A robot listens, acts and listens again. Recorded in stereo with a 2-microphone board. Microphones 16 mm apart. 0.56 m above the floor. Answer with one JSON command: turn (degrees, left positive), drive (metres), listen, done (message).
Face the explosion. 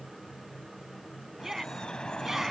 {"listen": true}
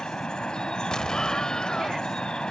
{"turn": 50}
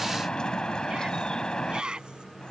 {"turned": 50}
{"listen": true}
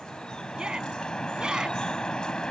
{"done": "I heard an explosion, but can't make it out now. It was about straight ahead or 80° left."}